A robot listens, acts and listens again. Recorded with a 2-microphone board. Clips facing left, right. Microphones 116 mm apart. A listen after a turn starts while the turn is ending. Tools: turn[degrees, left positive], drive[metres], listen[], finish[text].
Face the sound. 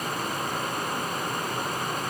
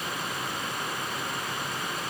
Action: listen[]
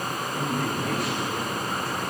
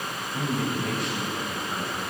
Action: turn[30]
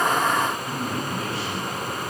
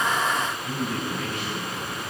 Thought: So it is at 150° left.
Action: turn[150]
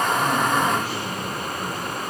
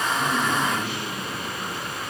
Action: listen[]
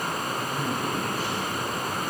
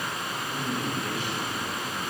Thought: The man speaking is now 40° left.
Action: turn[40]
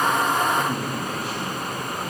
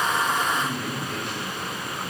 Action: finish[Facing the man speaking.]